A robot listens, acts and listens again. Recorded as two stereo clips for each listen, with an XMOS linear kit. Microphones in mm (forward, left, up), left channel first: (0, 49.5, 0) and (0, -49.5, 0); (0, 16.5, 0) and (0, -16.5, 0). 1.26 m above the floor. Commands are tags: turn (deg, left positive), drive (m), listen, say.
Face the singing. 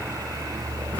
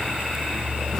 <listen/>
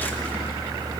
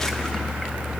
<listen/>
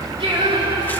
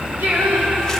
<turn deg="-60"/>
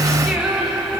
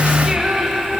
<say>Found it: singing, straight ahead.</say>